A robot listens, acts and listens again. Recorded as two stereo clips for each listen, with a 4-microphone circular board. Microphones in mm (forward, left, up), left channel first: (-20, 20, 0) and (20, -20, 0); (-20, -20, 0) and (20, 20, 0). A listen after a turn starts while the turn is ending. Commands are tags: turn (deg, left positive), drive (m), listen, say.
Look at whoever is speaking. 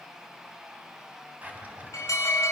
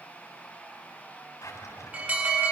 <listen/>
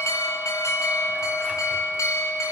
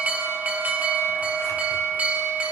<listen/>
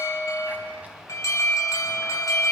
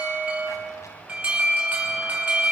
<say>I can't make out anyone speaking, only a drawer and an alarm.</say>